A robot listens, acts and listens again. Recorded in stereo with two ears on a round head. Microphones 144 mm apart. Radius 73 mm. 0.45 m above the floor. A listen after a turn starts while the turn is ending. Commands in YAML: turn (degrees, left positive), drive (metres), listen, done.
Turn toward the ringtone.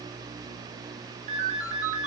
turn: -45
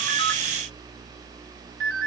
turn: -90
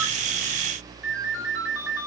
turn: -10
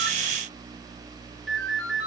done: "Facing the ringtone."